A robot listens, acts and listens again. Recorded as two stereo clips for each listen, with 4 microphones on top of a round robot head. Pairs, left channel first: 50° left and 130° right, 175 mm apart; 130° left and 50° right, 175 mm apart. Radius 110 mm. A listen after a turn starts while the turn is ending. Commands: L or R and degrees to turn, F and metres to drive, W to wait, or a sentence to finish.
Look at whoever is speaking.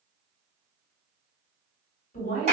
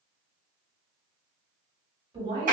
L10
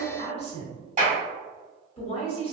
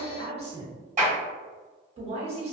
Found it: a woman speaking, straight ahead.